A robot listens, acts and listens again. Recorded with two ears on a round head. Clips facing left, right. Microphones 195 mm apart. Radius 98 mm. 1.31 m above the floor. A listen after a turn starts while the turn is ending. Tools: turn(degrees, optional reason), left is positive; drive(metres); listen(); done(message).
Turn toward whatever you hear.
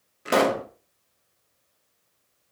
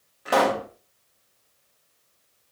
turn(degrees=30, reason="The pop: about 30° left or 150° left.")
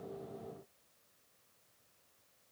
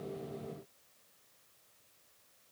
listen()
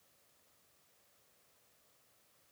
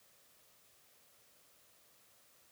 done("I heard a pop, but can't make it out now. It was about straight ahead or 120° left.")